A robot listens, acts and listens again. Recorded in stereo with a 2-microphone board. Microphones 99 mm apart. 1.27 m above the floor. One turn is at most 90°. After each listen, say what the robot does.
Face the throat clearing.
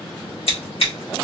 Keep listening.
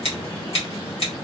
Keep listening.
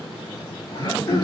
Turn 45° left.
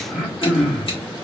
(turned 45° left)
Found it: throat clearing, straight ahead, 1 to 2 m away.